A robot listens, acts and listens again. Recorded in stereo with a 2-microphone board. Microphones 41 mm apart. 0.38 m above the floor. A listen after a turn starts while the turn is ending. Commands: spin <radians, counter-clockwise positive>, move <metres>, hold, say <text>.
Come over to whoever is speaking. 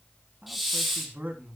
spin -0.79
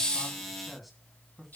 move 1.0
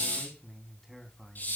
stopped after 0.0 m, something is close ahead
say Something is in my way. I am facing the man speaking but have not reached it.